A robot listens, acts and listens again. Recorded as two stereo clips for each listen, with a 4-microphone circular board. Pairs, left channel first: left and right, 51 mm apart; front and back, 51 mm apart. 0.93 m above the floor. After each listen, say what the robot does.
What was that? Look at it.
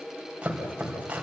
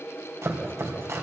Turn 155° right.
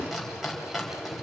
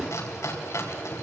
Facing the chopping, 2 to 4 m away.